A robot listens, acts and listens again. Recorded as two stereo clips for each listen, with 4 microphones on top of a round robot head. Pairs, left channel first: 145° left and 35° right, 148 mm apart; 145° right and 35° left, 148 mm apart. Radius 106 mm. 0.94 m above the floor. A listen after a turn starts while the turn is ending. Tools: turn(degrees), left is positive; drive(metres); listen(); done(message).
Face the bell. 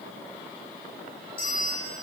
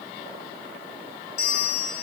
turn(degrees=-160)
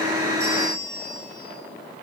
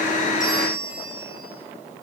turn(degrees=-45)
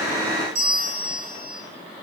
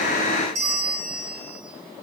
done("Facing the bell, 2 to 4 m away.")